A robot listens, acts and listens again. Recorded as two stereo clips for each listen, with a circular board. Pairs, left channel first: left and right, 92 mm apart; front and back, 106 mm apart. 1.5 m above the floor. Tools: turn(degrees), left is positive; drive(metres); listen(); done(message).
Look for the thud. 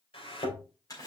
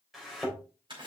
turn(degrees=90)
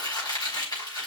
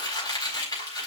done("Facing where the thud came from. I can't hear it now.")